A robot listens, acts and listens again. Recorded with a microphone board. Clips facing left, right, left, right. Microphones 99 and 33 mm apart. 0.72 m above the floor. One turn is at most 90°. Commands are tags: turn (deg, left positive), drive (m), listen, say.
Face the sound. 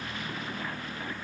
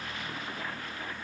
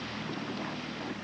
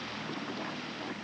<listen/>
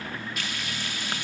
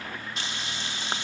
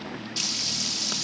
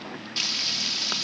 <turn deg="-25"/>
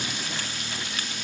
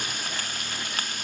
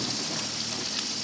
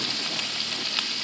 <turn deg="-90"/>
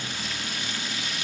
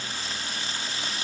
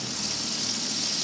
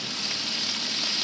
<turn deg="-40"/>
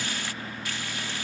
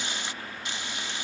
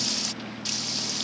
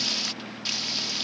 <turn deg="-25"/>
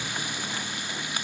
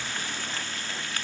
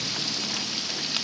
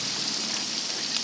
<turn deg="15"/>
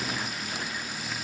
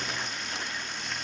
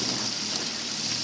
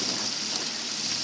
<listen/>
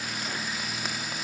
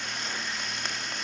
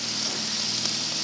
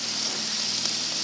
<say>Found it: frying, straight ahead.</say>